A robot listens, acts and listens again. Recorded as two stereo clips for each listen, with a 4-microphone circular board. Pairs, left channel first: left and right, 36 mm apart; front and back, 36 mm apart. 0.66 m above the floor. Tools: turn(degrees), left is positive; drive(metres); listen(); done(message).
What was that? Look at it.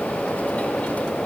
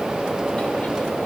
listen()
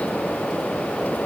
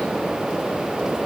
listen()
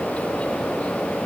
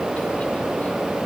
done("I can't make out anything to turn to.")